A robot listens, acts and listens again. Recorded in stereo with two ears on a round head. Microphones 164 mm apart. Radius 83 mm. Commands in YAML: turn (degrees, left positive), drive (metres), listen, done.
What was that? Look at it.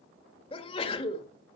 turn: 30
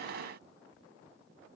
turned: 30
listen: true
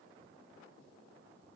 done: "I heard a sneeze, but can't make it out now. It was about straight ahead or 120° left."